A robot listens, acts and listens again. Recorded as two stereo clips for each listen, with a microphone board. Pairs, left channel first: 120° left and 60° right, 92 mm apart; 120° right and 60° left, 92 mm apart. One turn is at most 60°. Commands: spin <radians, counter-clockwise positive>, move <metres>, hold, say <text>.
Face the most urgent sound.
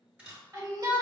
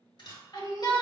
spin -1.05
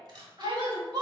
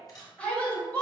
spin -0.79
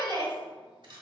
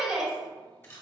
spin -0.35
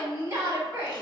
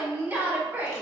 say Facing the shout, 1 to 2 m away.